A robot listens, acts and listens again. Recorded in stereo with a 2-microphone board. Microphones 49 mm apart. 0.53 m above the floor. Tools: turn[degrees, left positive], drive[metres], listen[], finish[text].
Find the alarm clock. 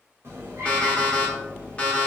Thought: The alarm clock: about 25° left or 155° left.
Action: turn[25]
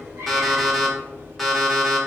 Action: finish[Facing the alarm clock, 1 to 2 m away.]